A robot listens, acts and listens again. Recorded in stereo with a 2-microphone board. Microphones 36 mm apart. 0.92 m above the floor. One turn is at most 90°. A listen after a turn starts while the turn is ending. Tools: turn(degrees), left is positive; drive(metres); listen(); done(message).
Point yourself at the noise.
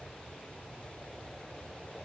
listen()
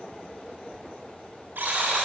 turn(degrees=-90)
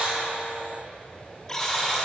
turn(degrees=10)
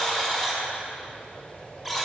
done("Facing the buzzer.")